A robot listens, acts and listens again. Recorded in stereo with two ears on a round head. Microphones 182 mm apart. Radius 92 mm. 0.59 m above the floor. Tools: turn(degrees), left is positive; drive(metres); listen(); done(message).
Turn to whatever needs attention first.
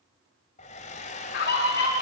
turn(degrees=55)
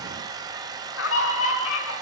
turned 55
turn(degrees=70)
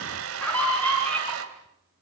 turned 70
turn(degrees=10)
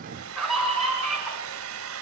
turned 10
done("Facing the scream, over 4 m away.")